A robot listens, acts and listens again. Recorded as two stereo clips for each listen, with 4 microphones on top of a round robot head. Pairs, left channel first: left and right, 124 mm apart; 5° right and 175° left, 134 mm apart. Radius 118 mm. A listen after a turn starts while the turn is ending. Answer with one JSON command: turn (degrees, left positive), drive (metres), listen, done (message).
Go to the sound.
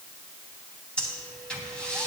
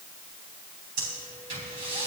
{"turn": 170}
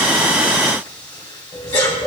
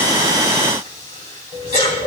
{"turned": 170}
{"turn": 30}
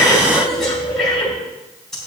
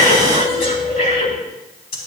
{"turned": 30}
{"drive": 1.0}
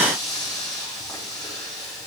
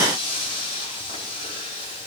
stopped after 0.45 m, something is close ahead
{"done": "Blocked. The breathing is further on, straight ahead."}